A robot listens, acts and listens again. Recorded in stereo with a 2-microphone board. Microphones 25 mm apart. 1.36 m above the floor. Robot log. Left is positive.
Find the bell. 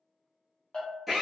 note: The bell: about 40° left or 140° left.
cmd yaw +40
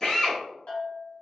note: So it is at 100° left.
cmd yaw +100
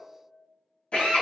note: The bell is now 35° left.
cmd yaw +35
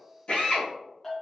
note: The bell is now 15° left.
cmd yaw +15
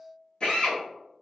end: Facing the bell.